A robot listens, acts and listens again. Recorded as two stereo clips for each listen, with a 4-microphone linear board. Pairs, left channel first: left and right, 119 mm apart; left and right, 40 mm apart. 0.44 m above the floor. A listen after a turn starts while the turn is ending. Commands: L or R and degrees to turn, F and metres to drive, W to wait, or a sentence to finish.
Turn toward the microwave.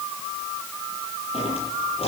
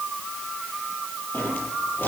W
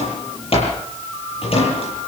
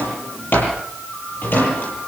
W
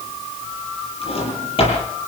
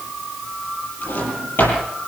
I can't make out a microwave, only a drawer.